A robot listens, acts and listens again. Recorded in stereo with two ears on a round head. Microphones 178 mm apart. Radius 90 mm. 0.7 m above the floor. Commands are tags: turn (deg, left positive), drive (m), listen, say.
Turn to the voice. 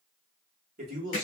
<turn deg="-40"/>
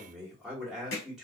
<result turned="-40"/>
<say>Found it: a man speaking, straight ahead.</say>